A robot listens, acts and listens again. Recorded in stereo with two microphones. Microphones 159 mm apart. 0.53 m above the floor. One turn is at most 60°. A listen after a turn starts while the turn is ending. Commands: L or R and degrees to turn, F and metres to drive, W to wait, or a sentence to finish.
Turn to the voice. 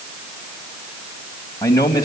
L25
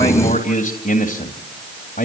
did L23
L60
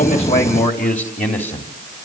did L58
L50
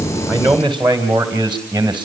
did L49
R10
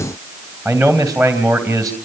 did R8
Found it: a man speaking, straight ahead.